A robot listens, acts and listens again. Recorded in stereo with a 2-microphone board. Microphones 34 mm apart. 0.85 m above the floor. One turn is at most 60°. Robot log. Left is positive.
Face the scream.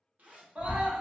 note: The scream: about 45° right or 135° right.
cmd yaw -45
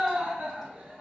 note: So it is at 80° right.
cmd yaw -60
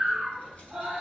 note: The scream is now 20° right.
cmd yaw -20
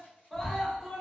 end: Facing the scream, 1 to 2 m away.